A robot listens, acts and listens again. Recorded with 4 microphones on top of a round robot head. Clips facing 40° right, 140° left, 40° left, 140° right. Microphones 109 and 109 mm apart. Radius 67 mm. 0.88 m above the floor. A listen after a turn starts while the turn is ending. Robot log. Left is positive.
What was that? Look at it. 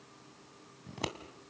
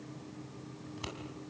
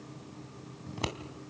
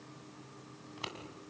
end: Facing the scissors.